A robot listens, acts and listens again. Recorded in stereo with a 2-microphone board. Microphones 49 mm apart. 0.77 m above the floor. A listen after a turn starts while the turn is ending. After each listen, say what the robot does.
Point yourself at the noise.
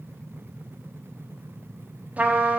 Turn 30° right.
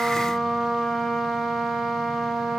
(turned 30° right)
Facing the trumpet.